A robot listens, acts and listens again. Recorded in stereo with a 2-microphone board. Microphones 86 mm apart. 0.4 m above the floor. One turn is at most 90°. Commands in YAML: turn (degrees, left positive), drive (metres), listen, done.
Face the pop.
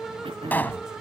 turn: 20
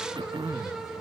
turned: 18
listen: true
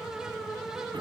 done: "I heard a pop, but can't make it out now. It was about straight ahead or 140° left."